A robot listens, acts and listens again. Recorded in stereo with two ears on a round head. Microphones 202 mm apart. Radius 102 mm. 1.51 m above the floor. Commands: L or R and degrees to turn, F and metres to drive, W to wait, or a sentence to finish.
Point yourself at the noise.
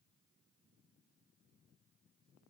W
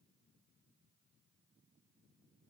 W
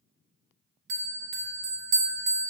R50
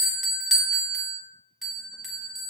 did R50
Found it: a bell, straight ahead.